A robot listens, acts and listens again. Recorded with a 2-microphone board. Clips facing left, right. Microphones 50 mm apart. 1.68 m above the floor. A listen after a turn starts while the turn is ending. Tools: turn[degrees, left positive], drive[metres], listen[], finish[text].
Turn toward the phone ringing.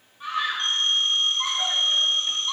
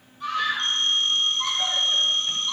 Thought: The phone ringing: about 15° left or 165° left.
Action: turn[15]
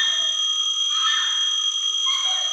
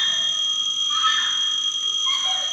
Thought: So it is at 150° left.
Action: turn[150]
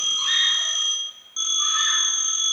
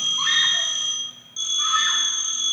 Thought: The phone ringing is now 40° left.
Action: turn[40]
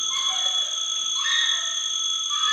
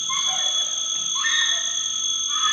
Thought: The phone ringing is now 15° left.
Action: turn[15]
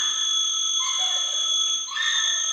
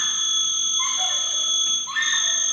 Action: finish[Facing the phone ringing.]